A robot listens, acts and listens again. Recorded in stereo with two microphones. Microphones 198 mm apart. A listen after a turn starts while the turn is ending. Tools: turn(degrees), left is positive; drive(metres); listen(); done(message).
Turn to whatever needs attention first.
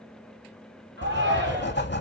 turn(degrees=-70)
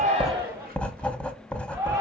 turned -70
turn(degrees=-15)
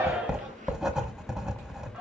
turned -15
listen()
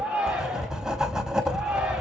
done("Found it: a shout, straight ahead, 2 to 4 m away.")